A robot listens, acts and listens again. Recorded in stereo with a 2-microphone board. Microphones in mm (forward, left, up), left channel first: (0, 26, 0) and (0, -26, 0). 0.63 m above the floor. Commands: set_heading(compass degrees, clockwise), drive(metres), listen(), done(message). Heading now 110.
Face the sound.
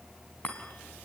set_heading(80)
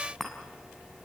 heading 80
done("Found it: a chime, straight ahead, over 4 m away.")